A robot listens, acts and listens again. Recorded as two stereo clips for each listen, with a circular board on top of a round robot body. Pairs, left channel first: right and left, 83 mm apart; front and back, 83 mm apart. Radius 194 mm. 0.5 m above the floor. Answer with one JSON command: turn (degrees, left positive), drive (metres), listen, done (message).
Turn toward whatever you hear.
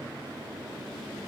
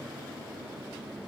{"listen": true}
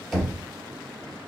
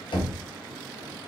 {"done": "Found it: knocking, straight ahead."}